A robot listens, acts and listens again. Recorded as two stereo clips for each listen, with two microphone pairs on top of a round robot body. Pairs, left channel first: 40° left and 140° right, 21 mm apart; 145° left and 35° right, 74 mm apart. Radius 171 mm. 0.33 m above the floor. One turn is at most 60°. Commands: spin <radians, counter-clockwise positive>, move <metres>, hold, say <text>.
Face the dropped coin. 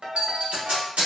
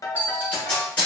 spin -1.05
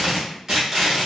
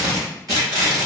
spin -0.70
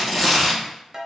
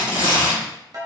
say Facing where the dropped coin came from. I can't hear it now.